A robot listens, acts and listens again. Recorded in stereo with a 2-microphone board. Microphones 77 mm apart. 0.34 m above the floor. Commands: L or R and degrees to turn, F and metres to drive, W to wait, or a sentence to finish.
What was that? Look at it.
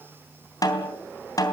L50
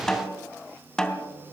L10
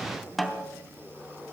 Facing the snare drum.